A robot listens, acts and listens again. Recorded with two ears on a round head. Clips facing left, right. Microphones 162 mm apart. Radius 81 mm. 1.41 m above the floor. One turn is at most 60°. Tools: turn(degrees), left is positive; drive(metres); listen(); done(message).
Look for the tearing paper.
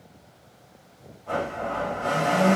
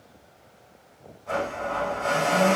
listen()
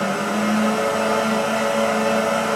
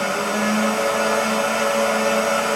listen()
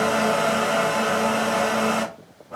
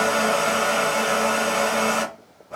done("I can't make out tearing paper to turn to.")